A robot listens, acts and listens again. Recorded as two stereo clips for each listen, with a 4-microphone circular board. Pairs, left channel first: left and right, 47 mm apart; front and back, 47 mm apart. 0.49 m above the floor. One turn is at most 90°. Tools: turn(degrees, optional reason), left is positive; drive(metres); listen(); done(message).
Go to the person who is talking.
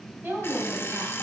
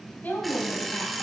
turn(degrees=-45, reason="The woman speaking: 45° right.")
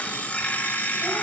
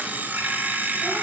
listen()
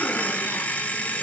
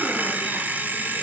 listen()
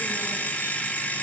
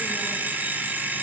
done("Facing where the woman speaking came from. I can't hear it now. I did not reach it.")